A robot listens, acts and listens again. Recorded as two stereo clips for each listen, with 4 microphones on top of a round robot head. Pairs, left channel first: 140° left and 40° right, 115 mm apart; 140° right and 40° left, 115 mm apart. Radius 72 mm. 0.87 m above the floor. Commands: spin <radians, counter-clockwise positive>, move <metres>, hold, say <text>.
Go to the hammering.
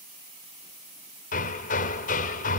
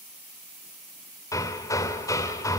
spin 2.71
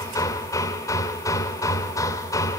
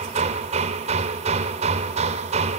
spin 1.31
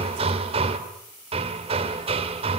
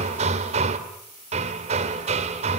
move 1.0
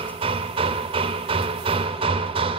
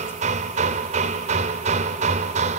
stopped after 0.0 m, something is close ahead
spin 0.17
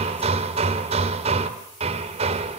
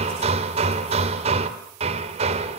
say Something is in my way. I am facing the hammering but have not reached it.